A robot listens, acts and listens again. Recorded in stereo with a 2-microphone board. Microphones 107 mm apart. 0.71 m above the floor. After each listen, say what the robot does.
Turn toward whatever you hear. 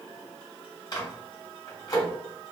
Turn 35° left.
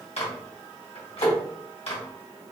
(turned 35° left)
Turn 105° left.
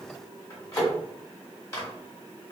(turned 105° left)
Turn 30° left.
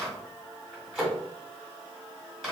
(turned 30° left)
Facing the microwave.